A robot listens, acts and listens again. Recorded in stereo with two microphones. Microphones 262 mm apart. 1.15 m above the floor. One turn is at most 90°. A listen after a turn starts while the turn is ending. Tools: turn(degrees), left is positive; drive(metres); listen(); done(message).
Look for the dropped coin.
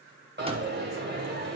turn(degrees=-40)
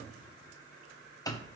listen()
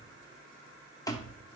done("I heard a dropped coin, but can't make it out now. It was about straight ahead or 100° right.")